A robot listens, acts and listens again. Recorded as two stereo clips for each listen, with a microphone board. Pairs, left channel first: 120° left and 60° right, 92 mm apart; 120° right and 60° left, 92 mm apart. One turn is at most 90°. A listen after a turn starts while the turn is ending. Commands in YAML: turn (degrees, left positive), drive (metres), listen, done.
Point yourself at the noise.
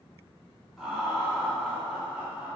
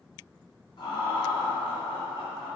turn: -90
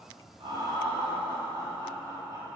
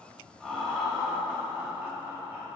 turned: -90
done: "Found it: laughter, straight ahead."